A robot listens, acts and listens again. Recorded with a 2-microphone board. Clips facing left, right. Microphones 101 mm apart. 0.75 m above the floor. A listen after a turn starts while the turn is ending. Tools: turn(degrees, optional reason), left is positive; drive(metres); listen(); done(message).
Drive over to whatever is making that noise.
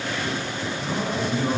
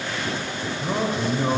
turn(degrees=-35, reason="The man speaking: about 35° right or 145° right.")
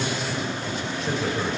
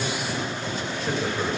drive(metres=1.0)
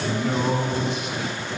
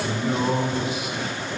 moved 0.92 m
drive(metres=1.0)
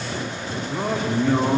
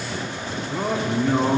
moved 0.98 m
drive(metres=1.0)
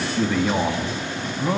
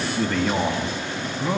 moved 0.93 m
drive(metres=1.0)
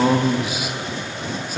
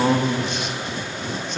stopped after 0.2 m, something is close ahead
turn(degrees=10, reason="The man speaking is now 10° left.")
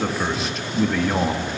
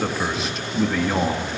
done("Arrived at the man speaking, straight ahead.")